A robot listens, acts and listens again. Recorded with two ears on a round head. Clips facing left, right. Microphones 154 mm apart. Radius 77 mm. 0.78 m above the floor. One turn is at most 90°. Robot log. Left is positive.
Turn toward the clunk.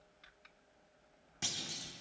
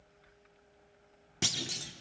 note: The clunk: about 60° right or 120° right.
cmd yaw -60
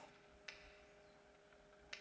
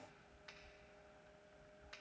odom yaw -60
cmd idle
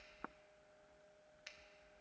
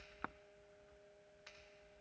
end: I heard a clunk, but can't make it out now. It was about straight ahead or 60° right.